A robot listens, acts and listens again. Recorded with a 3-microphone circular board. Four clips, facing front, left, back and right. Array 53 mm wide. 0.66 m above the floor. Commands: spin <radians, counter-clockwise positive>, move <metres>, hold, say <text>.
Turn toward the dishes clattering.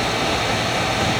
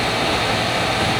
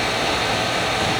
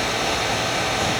hold
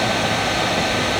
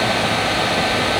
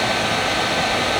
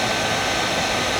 hold
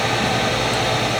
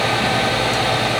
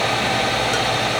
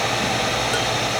say I can't make out dishes clattering.